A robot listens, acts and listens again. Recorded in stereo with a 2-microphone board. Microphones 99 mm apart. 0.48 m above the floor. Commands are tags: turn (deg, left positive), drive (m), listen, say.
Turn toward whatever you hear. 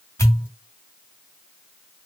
<turn deg="35"/>
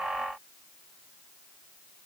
<listen/>
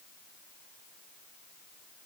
<say>I heard a pop, but can't make it out now. It was about straight ahead or 110° left.</say>